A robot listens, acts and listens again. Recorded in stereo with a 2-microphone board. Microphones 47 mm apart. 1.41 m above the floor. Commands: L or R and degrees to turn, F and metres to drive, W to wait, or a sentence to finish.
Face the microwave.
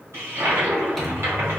L30
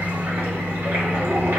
L150
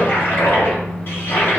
L20
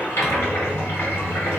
Facing the microwave.